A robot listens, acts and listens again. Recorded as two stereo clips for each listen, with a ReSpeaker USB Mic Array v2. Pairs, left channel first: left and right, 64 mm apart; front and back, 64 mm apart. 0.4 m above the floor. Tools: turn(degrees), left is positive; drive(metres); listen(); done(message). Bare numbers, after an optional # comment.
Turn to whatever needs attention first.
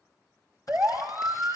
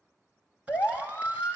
# The siren: 35° right.
turn(-35)
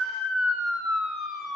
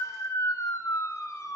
done("Facing the siren, 2 to 4 m away.")